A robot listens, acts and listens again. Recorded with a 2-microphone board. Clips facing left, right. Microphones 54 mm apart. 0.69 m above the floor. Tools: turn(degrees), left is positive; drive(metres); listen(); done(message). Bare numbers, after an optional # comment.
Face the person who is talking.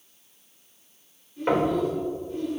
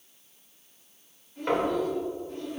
# The child speaking: about 55° right or 125° right.
turn(-55)
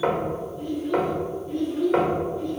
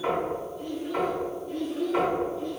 # So it is at 10° left.
turn(10)
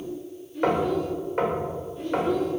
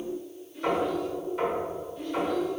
done("Facing the child speaking.")